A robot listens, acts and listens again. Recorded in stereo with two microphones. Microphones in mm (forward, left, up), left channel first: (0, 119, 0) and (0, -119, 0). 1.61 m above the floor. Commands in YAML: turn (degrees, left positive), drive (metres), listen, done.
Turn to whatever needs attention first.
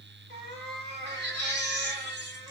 turn: -50
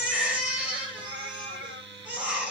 done: "Found it: a baby crying, straight ahead."